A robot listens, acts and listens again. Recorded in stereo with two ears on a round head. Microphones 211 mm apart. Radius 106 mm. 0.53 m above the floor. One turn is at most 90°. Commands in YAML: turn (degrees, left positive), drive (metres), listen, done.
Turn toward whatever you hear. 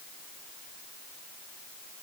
listen: true
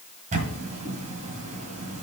turn: -30
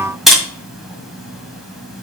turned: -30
done: "Facing the camera shutter."